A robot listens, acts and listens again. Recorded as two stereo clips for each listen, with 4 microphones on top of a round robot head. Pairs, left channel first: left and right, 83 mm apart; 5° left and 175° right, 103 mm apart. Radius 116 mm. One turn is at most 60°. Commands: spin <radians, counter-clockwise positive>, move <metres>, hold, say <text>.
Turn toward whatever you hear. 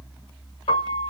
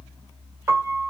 spin 1.05
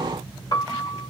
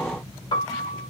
spin 0.87
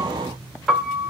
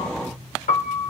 say Found it: a piano, straight ahead, 1 to 2 m away.